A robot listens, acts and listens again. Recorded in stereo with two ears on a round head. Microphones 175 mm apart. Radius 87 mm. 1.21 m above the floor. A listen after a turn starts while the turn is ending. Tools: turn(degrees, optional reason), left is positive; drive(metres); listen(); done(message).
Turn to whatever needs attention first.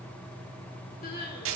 turn(degrees=50, reason="The crying: about 50° left or 130° left.")
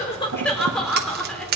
done("Facing the crying.")